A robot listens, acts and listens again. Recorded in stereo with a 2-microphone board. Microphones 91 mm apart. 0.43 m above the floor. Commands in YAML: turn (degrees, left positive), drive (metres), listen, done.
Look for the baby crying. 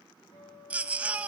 turn: -15
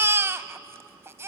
turn: -150
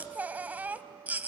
turn: -20
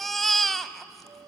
done: "Facing the baby crying."